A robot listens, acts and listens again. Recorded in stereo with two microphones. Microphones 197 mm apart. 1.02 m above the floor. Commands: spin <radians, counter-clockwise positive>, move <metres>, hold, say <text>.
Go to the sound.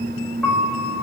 spin 0.52
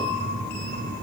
hold
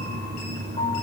hold
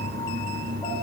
say I heard a piano, but can't make it out now. It was about 25° right or 145° left. I did not reach it.